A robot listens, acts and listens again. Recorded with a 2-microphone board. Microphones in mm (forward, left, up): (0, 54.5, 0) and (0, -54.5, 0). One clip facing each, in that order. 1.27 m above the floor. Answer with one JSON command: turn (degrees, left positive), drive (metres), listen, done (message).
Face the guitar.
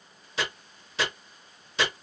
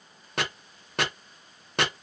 {"listen": true}
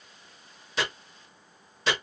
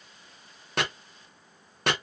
{"listen": true}
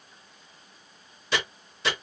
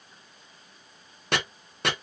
{"done": "I can't make out a guitar, only chopping."}